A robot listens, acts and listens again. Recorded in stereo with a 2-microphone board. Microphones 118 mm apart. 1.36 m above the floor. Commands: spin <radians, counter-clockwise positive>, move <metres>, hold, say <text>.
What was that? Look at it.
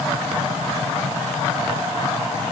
hold
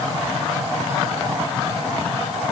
hold
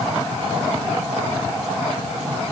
say I can't make out anything to turn to.